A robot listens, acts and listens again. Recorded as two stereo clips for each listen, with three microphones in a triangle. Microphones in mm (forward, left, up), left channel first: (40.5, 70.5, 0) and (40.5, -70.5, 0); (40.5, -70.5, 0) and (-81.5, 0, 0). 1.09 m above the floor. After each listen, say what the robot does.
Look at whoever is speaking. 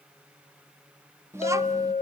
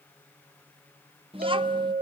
Turn 160° right.
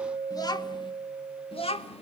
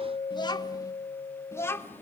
Turn 45° left.
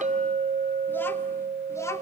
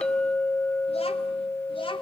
Turn 20° left.
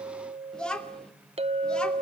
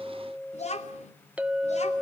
Facing the child speaking, 2 to 4 m away.